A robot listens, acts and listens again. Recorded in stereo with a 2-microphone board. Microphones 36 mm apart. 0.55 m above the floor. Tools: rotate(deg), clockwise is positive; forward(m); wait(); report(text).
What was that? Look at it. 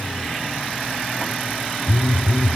rotate(-35)
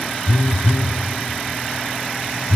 rotate(-110)
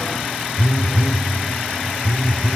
rotate(-15)
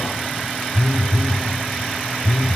report("Found it: a phone buzzing, straight ahead.")